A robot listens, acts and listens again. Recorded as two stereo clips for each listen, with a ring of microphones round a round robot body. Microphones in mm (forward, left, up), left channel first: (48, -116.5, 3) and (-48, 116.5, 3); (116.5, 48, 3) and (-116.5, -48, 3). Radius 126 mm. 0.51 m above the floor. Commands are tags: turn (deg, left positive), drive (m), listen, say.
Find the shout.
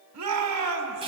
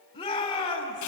<turn deg="95"/>
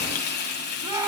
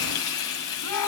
<turn deg="35"/>
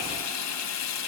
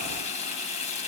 <listen/>
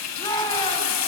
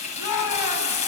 <turn deg="10"/>
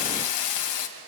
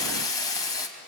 <listen/>
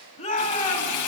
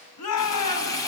<say>Found it: a shout, straight ahead.</say>